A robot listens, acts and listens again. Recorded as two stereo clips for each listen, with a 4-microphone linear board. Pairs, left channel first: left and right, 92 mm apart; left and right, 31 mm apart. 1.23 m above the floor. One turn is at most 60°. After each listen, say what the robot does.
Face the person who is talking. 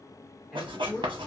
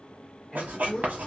Turn 30° left.
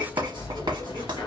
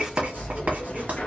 Keep listening.
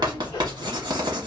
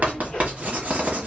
Keep listening.
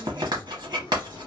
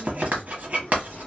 I heard a man speaking, but can't make it out now. It was about 30° right or 150° left.